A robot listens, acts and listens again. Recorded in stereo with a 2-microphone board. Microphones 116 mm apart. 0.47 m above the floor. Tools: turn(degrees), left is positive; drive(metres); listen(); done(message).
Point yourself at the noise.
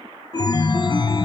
turn(degrees=40)
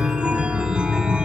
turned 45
turn(degrees=-10)
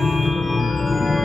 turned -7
done("Facing the chime.")